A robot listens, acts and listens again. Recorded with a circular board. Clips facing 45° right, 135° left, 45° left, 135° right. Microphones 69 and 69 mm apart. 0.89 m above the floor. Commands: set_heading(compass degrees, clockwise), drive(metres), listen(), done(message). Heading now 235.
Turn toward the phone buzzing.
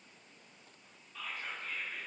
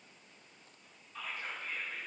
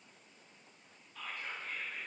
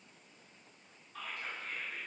listen()
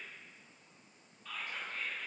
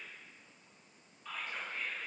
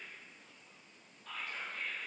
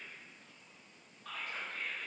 listen()
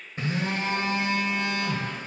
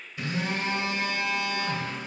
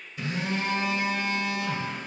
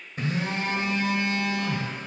set_heading(330)
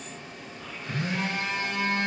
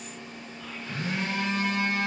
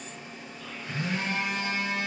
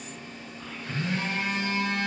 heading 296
set_heading(326)
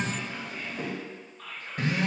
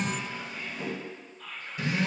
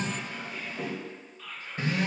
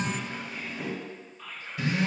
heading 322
done("Found it: a phone buzzing, straight ahead.")